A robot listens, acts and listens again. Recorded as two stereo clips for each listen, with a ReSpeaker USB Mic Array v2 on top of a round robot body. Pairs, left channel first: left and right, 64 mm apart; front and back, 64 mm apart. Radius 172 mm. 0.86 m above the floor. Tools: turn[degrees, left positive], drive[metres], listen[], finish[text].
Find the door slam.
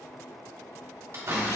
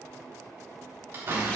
Thought: The door slam: 130° right.
Action: turn[-130]
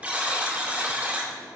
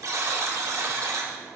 Action: finish[I heard a door slam from this way, but can't make it out now.]